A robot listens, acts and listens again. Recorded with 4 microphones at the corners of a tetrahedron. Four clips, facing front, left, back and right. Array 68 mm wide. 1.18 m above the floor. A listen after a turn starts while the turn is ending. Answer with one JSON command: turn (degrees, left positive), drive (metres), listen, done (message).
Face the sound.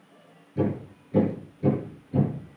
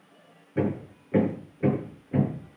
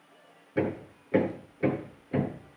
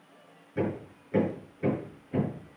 {"turn": 165}
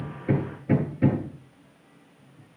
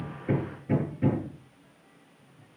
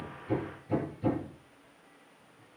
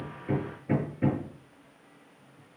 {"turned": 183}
{"turn": -20}
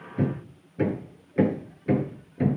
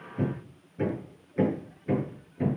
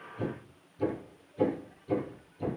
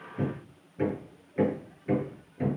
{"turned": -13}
{"done": "Facing the hammering."}